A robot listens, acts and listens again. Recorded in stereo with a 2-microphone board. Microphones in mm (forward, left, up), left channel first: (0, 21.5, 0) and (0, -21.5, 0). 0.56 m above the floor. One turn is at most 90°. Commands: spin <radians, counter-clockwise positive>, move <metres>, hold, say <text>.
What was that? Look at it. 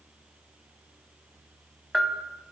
spin 0.52
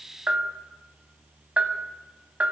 spin -0.52
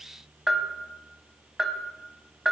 say Found it: a bell, straight ahead, 1 to 2 m away.